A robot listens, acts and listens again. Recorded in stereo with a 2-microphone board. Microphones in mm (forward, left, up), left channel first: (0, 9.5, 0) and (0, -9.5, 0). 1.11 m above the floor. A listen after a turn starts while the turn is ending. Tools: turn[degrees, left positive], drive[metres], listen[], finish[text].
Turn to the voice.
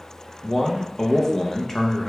Thought: The man speaking: about 15° left or 165° left.
Action: turn[15]
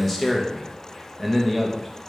Action: finish[Facing the man speaking.]